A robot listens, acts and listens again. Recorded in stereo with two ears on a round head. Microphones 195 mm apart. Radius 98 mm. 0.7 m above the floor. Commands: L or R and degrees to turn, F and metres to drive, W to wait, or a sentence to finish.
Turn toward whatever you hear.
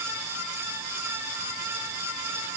W
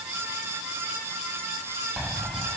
L30
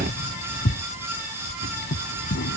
L125
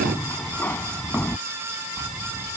L10
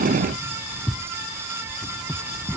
Facing the keys jangling.